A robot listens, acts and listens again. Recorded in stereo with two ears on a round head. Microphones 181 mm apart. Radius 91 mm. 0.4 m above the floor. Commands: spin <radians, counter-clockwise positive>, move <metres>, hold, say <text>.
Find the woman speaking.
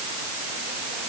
hold
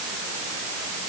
hold
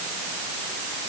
say I can't make out a woman speaking to turn to.